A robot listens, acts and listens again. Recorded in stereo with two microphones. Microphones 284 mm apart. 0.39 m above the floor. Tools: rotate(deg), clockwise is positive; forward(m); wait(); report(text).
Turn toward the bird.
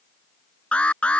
wait()
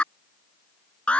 wait()
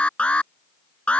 report("I can't make out a bird to turn to.")